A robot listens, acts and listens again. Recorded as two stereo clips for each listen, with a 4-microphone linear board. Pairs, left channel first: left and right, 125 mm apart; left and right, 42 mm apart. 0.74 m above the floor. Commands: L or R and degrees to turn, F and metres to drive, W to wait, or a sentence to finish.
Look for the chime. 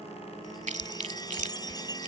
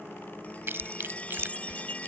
L30
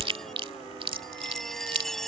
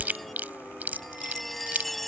Facing the chime.